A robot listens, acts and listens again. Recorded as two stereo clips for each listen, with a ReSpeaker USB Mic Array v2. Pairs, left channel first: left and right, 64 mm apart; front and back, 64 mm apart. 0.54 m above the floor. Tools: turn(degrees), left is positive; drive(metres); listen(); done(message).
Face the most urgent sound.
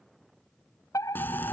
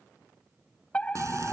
turn(degrees=70)
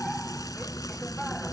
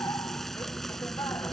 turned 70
listen()
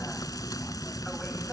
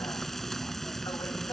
listen()
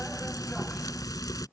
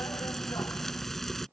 done("Facing where the fire alarm came from. I can't hear it now.")